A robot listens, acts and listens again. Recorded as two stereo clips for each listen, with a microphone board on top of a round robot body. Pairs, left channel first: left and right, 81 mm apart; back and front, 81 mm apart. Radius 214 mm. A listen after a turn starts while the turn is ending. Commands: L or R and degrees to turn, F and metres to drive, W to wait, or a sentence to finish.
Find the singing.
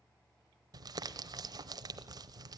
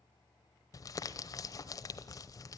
W
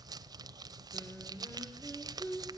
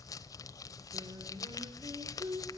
L25
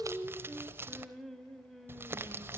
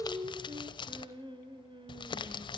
Found it: singing, straight ahead.